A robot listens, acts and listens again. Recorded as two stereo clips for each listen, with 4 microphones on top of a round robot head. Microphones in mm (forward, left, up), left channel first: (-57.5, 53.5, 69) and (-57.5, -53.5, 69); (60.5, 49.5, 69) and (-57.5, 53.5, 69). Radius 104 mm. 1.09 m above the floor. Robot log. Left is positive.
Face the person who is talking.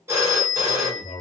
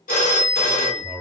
note: The man speaking: 105° left.
cmd yaw +105
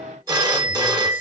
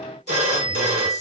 cmd idle
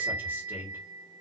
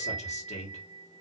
note: The man speaking is now 20° right.
cmd yaw -20
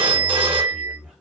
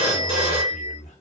end: Found it: a man speaking, straight ahead.